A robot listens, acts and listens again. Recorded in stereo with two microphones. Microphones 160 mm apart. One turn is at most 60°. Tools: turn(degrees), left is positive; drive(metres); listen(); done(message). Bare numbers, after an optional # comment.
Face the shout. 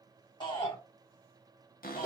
# The shout: about 35° left or 145° left.
turn(35)
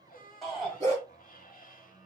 done("Found it: a shout, straight ahead, 2 to 4 m away.")